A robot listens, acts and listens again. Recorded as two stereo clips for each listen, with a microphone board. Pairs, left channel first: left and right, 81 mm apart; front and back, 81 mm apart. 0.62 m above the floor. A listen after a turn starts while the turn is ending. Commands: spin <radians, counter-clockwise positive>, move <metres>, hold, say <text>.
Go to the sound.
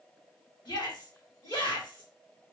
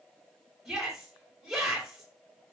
spin 1.66
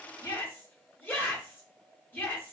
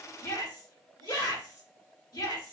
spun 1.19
spin 0.44
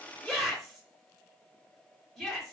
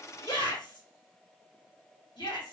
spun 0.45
move 1.0
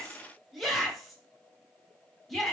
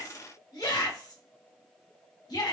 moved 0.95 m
move 1.0
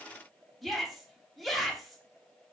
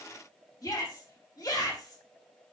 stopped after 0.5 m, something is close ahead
say Arrived at the shout, straight ahead.